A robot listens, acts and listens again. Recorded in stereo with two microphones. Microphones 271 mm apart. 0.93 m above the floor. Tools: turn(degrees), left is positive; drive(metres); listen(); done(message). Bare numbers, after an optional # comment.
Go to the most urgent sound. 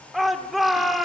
turn(30)
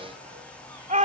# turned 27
# So it is at 30° right.
turn(-30)
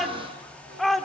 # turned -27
drive(1.0)
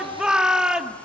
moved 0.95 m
drive(1.0)
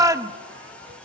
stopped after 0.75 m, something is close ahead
# The shout is now 15° right.
turn(-15)
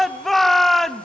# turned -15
done("Arrived at the shout, straight ahead.")